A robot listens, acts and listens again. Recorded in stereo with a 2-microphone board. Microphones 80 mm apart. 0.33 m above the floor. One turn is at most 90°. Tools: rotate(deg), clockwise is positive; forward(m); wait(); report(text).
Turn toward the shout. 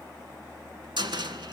wait()
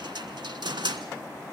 wait()
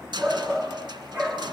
rotate(25)
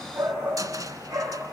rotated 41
rotate(90)
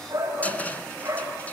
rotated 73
rotate(40)
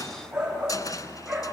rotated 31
report("Found it: a shout, straight ahead, over 4 m away.")